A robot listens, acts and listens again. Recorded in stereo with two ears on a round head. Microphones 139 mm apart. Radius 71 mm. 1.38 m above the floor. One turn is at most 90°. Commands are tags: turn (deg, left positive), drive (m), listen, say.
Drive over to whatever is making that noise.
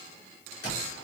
<turn deg="70"/>
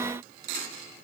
<listen/>
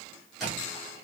<drive m="1.0"/>
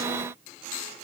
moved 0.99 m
<listen/>
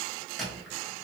<drive m="1.0"/>
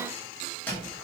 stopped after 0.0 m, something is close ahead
<turn deg="10"/>
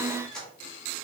<say>I am next to the squeak.</say>